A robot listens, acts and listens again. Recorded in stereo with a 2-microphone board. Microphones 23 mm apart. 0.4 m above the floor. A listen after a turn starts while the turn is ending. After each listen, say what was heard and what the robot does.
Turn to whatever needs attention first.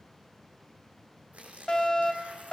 The fire alarm: about 35° left or 145° left. Turn 35° left.
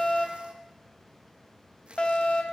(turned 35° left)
So it is at 105° left. Turn 105° left.
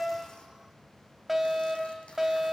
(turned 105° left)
Found it: a fire alarm, straight ahead.